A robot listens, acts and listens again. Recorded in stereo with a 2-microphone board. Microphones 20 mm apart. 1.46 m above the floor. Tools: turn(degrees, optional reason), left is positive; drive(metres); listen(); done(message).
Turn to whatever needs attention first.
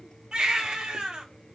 turn(degrees=-50, reason="The baby crying: about 50° right or 130° right.")
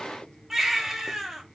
turn(degrees=-15, reason="So it is at 15° right.")
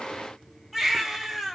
done("Facing the baby crying, 1 to 2 m away.")